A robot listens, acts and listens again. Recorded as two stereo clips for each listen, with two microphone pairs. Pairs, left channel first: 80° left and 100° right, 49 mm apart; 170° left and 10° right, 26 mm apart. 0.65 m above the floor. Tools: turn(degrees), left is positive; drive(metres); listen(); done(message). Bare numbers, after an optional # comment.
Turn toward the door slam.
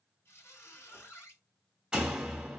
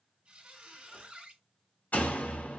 # The door slam: 175° right.
turn(-175)
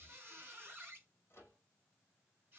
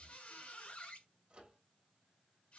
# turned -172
done("Facing where the door slam came from. I can't hear it now.")